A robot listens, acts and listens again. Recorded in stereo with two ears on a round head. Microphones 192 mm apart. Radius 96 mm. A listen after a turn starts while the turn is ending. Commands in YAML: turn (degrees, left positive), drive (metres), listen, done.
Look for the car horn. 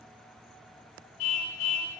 turn: 75
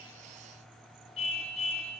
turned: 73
turn: 30
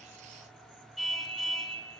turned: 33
done: "Facing the car horn."